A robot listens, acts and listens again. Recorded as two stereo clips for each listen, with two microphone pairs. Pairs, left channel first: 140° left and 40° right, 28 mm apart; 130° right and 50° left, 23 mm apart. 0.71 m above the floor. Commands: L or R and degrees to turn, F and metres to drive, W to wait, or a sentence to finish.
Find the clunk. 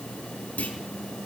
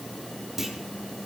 L125
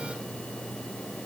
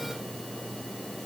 I heard a clunk from this way, but can't make it out now.